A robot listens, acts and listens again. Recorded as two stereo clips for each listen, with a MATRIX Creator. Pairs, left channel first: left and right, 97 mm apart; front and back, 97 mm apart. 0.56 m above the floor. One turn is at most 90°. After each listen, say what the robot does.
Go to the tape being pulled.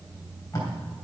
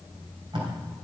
Turn 90° left.
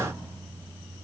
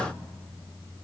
Turn 60° left.
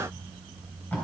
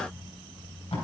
Turn 15° left.
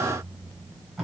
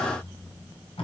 Drive 1.0 m forward.
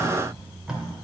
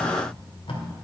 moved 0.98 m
Drive 1.0 m forward.
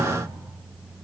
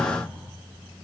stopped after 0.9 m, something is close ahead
Keep listening.
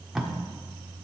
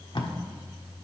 I am next to the tape being pulled.